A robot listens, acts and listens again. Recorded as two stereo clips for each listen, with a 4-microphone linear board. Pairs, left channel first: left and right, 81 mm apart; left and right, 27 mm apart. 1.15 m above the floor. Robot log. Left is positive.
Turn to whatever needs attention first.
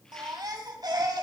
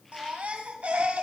note: The baby crying: about 55° right or 125° right.
cmd yaw -55
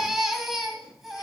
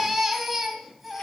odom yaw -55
end: Facing the baby crying, 2 to 4 m away.